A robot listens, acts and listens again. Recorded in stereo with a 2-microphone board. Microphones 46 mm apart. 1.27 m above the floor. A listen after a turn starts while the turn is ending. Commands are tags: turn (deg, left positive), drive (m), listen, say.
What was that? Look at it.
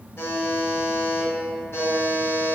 <turn deg="65"/>
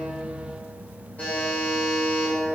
<turn deg="40"/>
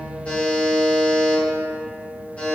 <turn deg="30"/>
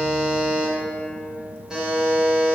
<turn deg="-10"/>
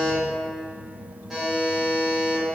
<say>Facing the buzzer, 1 to 2 m away.</say>